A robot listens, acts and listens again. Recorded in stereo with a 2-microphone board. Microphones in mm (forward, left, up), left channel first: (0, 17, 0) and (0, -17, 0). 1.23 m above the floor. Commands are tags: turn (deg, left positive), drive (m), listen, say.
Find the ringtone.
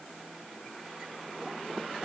<listen/>
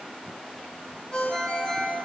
<turn deg="30"/>
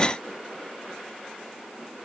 <listen/>
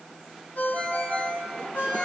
<turn deg="115"/>
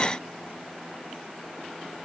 <listen/>
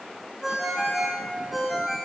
<say>Found it: a ringtone, straight ahead.</say>